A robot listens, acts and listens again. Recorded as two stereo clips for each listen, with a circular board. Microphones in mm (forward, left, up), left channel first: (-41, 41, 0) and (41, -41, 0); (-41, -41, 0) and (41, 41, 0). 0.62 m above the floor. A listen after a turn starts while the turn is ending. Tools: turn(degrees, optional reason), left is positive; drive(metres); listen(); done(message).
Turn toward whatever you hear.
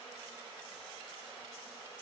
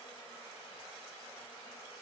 listen()
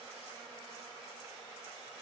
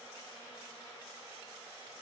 listen()
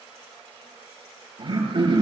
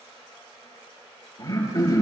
turn(degrees=-85, reason="The throat clearing: 85° right.")
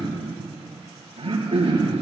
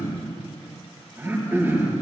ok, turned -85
turn(degrees=-25, reason="The throat clearing is now 25° right.")
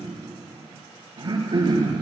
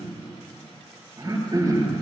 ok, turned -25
done("Found it: throat clearing, straight ahead.")